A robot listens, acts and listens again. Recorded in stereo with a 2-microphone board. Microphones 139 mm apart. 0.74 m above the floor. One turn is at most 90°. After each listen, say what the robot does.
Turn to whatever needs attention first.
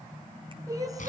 Turn 25° right.
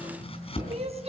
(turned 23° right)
Turn 90° right.
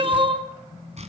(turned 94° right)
Turn 40° right.
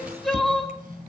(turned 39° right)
Found it: crying, straight ahead, 2 to 4 m away.